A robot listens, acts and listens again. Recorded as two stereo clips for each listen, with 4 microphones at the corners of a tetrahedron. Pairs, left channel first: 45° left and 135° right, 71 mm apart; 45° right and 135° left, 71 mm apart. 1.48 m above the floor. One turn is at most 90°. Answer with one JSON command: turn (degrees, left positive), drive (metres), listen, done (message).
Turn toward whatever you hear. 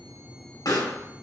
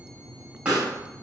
{"turn": 60}
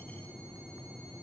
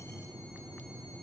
{"done": "I heard a pop from this way, but can't make it out now."}